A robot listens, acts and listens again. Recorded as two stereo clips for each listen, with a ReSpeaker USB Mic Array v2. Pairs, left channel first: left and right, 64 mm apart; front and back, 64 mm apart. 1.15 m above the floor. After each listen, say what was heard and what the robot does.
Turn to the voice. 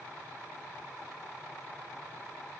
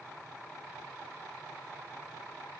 Keep listening.
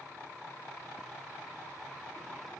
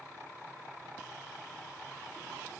Keep listening.
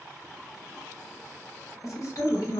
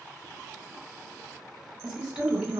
The woman speaking: 110° left. Turn 110° left.
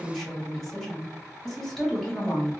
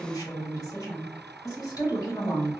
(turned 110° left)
The woman speaking is now 10° left. Turn 10° left.
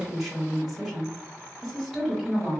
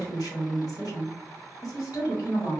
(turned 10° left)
Facing the woman speaking.